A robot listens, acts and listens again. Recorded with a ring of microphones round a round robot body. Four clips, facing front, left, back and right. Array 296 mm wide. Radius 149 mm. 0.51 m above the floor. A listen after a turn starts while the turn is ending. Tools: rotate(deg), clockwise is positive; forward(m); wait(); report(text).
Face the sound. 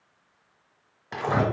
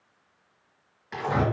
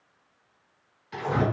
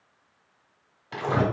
rotate(20)
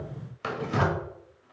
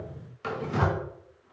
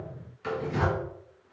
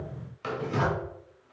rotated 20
report("Facing the tearing paper.")